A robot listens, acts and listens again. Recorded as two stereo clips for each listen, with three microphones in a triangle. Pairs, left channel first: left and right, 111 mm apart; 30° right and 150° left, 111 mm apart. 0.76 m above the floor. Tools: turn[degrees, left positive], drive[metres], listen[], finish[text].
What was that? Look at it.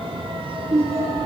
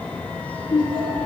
Thought: The laughter: 75° right.
Action: turn[-75]
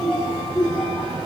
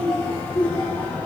Action: finish[Found it: laughter, straight ahead, over 4 m away.]